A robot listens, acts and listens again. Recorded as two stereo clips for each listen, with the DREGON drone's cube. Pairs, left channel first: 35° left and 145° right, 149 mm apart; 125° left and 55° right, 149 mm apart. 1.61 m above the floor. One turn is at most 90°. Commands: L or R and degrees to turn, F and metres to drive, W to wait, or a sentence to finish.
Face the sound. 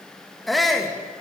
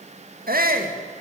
R55
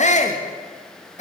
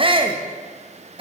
Found it: a shout, straight ahead, 2 to 4 m away.